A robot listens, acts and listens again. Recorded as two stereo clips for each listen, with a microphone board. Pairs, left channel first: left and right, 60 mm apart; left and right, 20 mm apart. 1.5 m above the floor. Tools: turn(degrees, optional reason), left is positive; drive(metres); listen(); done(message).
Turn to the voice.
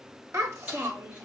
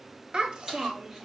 turn(degrees=-45, reason="The child speaking: about 45° right or 135° right.")
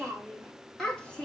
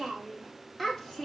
turn(degrees=15, reason="So it is at 15° left.")
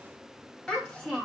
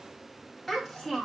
turn(degrees=15, reason="The child speaking is now 15° left.")
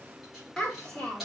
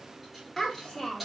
turn(degrees=15, reason="The child speaking is now 15° left.")
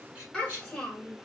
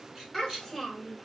done("Facing the child speaking, 2 to 4 m away.")